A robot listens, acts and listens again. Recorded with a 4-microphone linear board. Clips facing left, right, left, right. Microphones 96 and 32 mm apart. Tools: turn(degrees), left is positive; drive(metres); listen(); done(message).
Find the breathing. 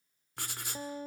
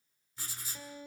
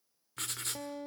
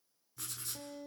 listen()
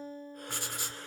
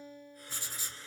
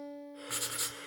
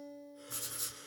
turn(degrees=55)
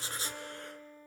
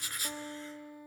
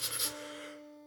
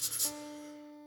listen()
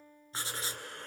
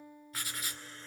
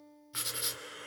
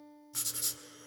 turn(degrees=65)
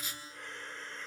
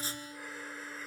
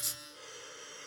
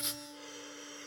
done("Facing the breathing.")